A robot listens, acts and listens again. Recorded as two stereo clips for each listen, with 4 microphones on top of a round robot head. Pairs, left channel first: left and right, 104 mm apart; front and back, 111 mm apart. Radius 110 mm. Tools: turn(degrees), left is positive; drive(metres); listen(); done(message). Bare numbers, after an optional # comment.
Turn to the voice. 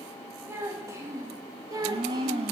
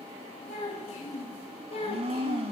# The child speaking: 35° right.
turn(-35)
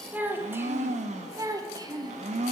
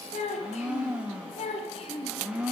# The child speaking is now 40° right.
turn(-40)
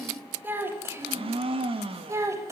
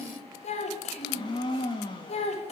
# The child speaking is now 25° right.
turn(-25)
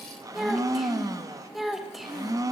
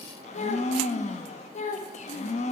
done("Facing the child speaking, 1 to 2 m away.")